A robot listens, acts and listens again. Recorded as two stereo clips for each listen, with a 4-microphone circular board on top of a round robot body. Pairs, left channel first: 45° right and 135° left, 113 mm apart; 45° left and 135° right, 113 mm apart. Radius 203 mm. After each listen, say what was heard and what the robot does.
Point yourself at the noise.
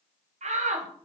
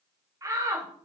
The shout: 160° left. Turn 160° left.
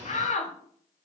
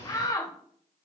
The shout is now 20° right. Turn 20° right.
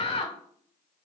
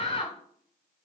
Facing the shout.